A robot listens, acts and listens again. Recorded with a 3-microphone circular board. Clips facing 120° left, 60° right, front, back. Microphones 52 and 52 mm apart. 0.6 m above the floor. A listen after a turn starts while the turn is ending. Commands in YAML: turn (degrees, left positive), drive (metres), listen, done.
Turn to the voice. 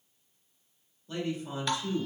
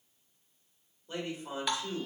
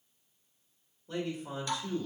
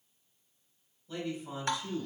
done: "Facing the man speaking."